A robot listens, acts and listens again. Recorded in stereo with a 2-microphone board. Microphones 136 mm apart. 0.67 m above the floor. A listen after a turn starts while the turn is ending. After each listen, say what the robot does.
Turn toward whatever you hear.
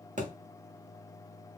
Turn 60° right.
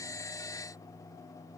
Keep listening.
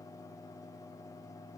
I heard a thud, but can't make it out now. It was about straight ahead or 60° right.